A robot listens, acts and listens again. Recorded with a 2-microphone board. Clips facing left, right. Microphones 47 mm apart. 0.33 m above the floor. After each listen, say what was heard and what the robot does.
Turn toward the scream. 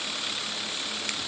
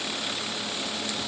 Keep listening.
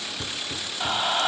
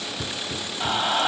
Turn 30° right.
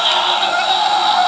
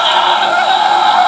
So it is at 145° right. Turn 145° right.
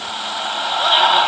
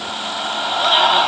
Found it: a scream, straight ahead.